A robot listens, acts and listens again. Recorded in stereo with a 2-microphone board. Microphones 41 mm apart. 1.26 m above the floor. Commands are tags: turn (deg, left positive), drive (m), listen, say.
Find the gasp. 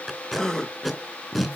<turn deg="15"/>
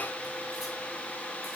<listen/>
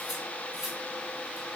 <say>I heard a gasp, but can't make it out now. It was about straight ahead or 150° left.</say>